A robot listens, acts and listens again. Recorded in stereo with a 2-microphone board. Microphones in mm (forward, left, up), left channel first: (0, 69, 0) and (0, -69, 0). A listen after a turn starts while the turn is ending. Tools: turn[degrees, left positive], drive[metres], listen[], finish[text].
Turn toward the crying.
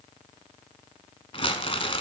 Action: listen[]
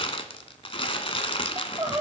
Thought: The crying: about 30° right or 150° right.
Action: turn[-30]
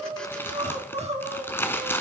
Thought: So it is at 115° right.
Action: turn[-115]
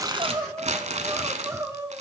Thought: The crying is now 25° right.
Action: turn[-25]
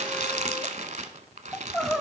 Action: finish[Found it: crying, straight ahead.]